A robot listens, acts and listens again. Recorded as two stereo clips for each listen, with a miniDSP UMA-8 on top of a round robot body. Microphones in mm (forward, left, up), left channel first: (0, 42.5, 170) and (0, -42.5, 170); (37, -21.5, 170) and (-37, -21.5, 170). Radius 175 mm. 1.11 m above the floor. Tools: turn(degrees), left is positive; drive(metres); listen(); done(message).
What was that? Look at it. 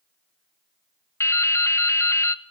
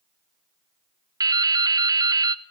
turn(degrees=145)
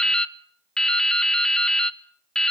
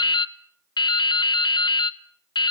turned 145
done("Facing the dripping, under 1 m away.")